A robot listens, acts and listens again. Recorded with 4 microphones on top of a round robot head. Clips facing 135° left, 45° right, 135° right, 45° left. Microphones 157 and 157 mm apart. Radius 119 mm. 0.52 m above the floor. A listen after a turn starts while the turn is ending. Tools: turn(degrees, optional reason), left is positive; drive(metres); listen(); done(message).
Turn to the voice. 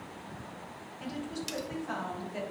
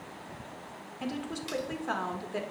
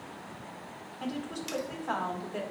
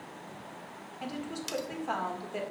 turn(degrees=-35, reason="The woman speaking: 35° right.")
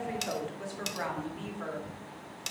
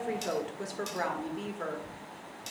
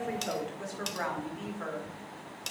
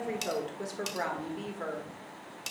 done("Facing the woman speaking, 1 to 2 m away.")